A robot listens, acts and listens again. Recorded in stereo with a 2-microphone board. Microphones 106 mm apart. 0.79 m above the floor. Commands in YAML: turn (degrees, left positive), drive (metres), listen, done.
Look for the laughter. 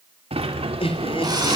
turn: 60
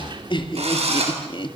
turn: 50
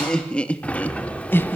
turn: 20
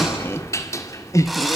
turn: 30
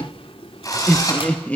turn: 15
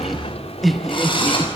done: "Found it: laughter, straight ahead, 1 to 2 m away."